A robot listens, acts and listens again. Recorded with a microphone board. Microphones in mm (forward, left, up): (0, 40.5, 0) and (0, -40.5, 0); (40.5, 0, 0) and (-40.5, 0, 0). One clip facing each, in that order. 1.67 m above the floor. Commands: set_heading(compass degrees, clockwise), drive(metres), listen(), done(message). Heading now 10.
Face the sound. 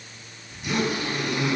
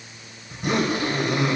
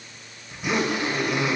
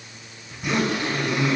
set_heading(95)
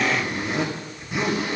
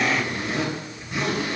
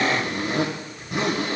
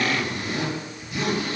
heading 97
done("Found it: a zipper, straight ahead, 2 to 4 m away.")